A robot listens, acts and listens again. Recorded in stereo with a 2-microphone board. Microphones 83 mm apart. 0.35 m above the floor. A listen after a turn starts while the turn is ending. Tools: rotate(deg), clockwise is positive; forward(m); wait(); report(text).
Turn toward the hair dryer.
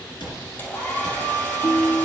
rotate(-25)
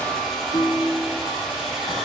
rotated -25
report("Found it: a hair dryer, straight ahead, 2 to 4 m away.")